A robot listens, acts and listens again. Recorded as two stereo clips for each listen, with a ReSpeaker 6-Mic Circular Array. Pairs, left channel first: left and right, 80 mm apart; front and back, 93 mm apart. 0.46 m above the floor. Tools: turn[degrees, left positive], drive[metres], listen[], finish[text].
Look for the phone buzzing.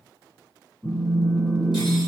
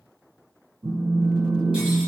Thought: The phone buzzing: 140° left.
Action: turn[140]
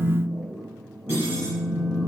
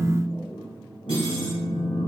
Thought: The phone buzzing is now 10° left.
Action: turn[10]
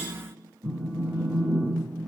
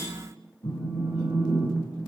Action: finish[Found it: a phone buzzing, straight ahead.]